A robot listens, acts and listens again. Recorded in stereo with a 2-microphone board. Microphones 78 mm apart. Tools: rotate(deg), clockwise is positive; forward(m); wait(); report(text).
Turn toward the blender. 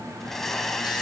rotate(-30)
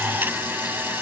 rotate(25)
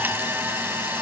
rotate(30)
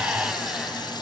wait()
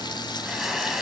report("Facing the blender, 2 to 4 m away.")